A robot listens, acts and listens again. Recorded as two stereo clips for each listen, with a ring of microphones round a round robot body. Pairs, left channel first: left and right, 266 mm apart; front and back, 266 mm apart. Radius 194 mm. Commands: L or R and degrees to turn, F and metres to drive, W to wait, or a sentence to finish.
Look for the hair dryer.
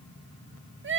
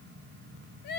W
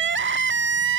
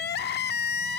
W
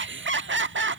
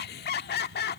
I can't make out a hair dryer, only crying.